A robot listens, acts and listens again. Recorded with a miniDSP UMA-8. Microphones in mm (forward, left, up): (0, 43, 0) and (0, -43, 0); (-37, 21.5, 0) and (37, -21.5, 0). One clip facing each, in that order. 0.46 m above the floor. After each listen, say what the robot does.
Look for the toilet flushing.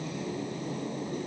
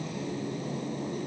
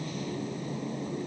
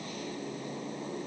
Keep listening.
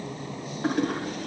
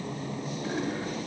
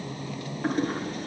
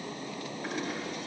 Turn 105° left.
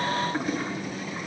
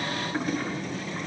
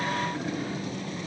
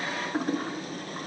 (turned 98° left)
Facing the toilet flushing.